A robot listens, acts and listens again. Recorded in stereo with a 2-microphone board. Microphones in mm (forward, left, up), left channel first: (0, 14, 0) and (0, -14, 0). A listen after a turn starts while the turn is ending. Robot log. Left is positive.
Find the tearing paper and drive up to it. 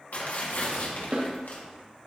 note: The tearing paper: about 70° left or 110° left.
cmd yaw +70
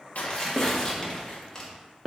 note: So it is at 15° left.
cmd yaw +15
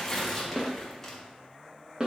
note: The tearing paper is now 10° left.
cmd yaw +10
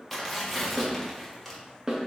cmd fwd 1.0
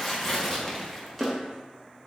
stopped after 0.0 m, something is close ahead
end: Something is in my way. I am facing the tearing paper but have not reached it.